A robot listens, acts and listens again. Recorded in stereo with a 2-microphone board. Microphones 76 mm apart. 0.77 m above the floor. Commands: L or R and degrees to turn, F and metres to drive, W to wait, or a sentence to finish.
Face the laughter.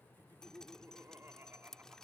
R30
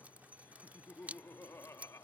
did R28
L40
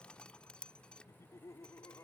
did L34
L50
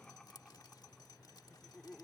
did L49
L10
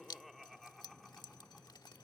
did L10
Facing the laughter.